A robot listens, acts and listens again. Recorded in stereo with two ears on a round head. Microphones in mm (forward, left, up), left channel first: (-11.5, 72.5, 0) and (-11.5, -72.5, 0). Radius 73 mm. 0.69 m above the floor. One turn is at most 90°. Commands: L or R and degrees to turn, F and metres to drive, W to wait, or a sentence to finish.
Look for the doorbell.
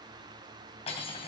W
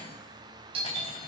R35
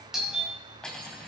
Facing the doorbell.